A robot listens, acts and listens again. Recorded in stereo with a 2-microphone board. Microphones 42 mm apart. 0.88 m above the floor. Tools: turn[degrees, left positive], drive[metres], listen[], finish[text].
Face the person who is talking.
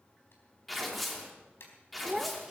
Action: turn[-30]
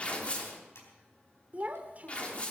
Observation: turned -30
Thought: So it is at 145° right.
Action: turn[-145]
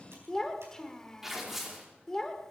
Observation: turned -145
Thought: The child speaking is now 10° left.
Action: turn[10]
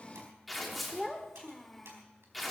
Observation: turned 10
Action: finish[Facing the child speaking, 1 to 2 m away.]